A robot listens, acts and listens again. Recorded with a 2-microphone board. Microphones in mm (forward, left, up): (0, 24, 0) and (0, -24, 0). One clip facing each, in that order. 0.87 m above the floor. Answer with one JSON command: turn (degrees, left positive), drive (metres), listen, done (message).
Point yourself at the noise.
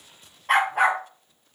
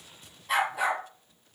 {"turn": 50}
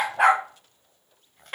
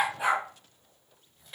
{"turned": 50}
{"turn": 50}
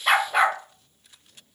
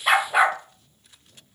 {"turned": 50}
{"turn": -10}
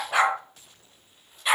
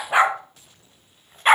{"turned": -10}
{"turn": -40}
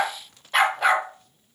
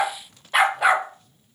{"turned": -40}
{"turn": -10}
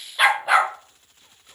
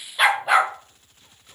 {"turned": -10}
{"done": "Found it: a dog barking, straight ahead, 1 to 2 m away."}